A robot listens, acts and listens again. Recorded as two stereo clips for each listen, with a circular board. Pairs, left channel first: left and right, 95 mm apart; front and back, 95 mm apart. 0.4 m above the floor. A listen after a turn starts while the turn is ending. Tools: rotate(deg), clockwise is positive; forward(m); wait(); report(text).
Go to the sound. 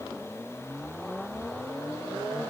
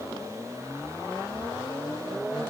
wait()
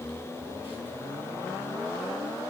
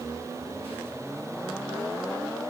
wait()
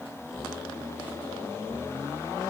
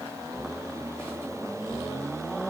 report("I can't make out anything.")